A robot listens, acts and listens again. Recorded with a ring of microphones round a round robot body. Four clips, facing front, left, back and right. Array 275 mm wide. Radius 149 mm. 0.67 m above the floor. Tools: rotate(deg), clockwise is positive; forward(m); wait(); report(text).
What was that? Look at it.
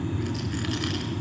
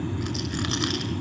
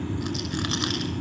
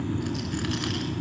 rotate(-150)
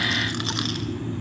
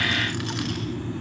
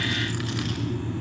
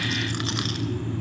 rotate(30)
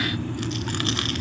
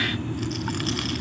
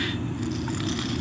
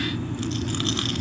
report("Found it: a rattle, straight ahead, over 4 m away.")